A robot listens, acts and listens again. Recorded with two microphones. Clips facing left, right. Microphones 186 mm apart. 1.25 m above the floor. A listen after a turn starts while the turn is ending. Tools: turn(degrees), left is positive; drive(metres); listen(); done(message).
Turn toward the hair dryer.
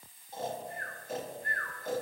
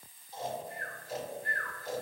listen()
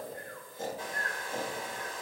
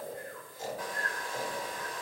turn(degrees=25)
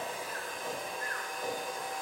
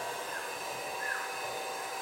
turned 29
done("Facing the hair dryer, 1 to 2 m away.")